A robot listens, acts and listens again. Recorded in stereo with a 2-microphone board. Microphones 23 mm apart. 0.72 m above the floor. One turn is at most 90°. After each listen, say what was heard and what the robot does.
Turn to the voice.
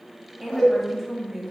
Turn 30° right.
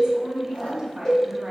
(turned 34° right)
So it is at 145° right. Turn 90° right.
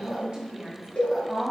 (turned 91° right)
The woman speaking is now 50° right. Turn 50° right.
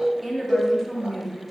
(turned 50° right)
Facing the woman speaking, 1 to 2 m away.